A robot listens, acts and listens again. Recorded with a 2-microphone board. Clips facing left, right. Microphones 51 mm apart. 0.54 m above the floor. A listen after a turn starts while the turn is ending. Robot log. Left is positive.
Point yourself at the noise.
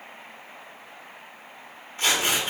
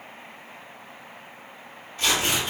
note: The tearing paper: about 35° left or 145° left.
cmd yaw +35
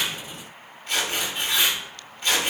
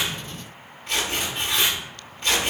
end: Facing the tearing paper, 1 to 2 m away.